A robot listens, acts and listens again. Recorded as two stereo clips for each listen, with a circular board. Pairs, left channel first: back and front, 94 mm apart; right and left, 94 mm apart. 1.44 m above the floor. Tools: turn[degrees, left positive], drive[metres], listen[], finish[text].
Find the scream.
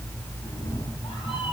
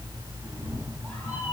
Action: listen[]
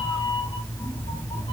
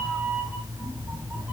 Action: listen[]
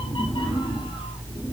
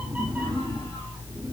Action: finish[I can't make out a scream to turn to.]